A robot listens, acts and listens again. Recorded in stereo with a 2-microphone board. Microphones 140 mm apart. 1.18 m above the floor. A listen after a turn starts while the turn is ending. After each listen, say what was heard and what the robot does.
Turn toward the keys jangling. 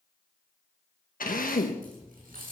Turn 90° right.
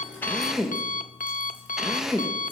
Keep listening.
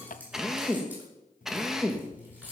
The keys jangling is now 15° right. Turn 15° right.
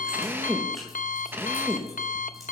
Keep listening.
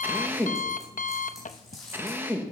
Facing the keys jangling, over 4 m away.